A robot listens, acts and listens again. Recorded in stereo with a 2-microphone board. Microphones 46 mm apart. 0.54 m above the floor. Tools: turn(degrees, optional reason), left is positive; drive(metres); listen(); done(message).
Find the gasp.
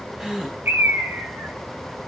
turn(degrees=-15, reason="The gasp: about 15° right or 165° right.")
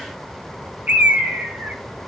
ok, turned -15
listen()
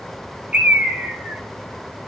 done("I heard a gasp, but can't make it out now. It was about straight ahead or 150° right.")